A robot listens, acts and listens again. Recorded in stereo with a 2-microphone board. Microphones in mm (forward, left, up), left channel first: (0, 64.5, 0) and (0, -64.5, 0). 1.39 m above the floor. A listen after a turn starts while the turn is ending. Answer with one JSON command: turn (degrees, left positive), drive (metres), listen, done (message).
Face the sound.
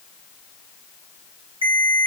{"turn": -45}
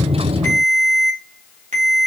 {"turn": -90}
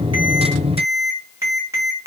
{"turn": -25}
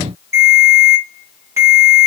{"turn": -25}
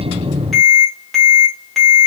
{"done": "Found it: a ringtone, straight ahead, 1 to 2 m away."}